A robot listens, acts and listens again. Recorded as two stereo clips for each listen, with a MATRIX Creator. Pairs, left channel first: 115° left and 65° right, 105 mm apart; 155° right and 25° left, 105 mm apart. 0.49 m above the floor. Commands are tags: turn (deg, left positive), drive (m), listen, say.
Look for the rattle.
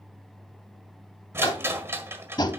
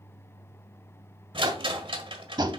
<say>Found it: a rattle, straight ahead, 1 to 2 m away.</say>